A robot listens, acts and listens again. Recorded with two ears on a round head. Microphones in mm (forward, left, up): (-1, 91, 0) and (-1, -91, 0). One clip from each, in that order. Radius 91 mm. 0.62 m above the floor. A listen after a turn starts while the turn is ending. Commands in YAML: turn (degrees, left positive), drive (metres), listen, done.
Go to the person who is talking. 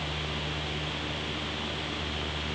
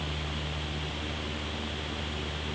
listen: true
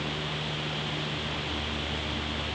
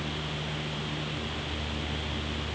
listen: true
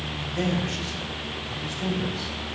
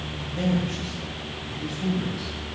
turn: 70
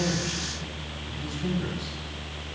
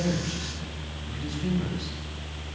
turn: 10
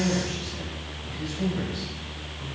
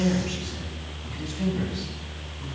drive: 1.0
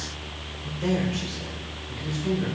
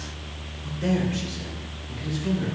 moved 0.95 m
drive: 1.0
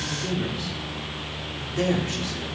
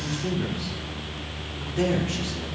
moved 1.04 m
turn: 15
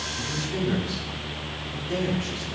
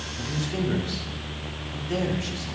drive: 1.0
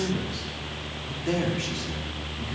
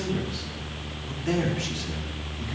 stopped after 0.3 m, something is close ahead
done: "I am next to the man speaking."